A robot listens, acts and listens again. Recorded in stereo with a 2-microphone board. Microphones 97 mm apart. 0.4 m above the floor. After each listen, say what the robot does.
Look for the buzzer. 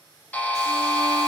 Turn 20° left.
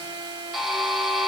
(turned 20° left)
Facing the buzzer.